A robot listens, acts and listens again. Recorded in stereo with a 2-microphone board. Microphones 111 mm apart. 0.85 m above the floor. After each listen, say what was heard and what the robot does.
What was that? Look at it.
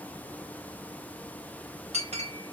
Turn 90° right.
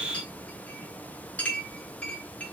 So it is at 10° left. Turn 10° left.
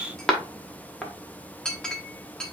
Found it: a clink, straight ahead, 1 to 2 m away.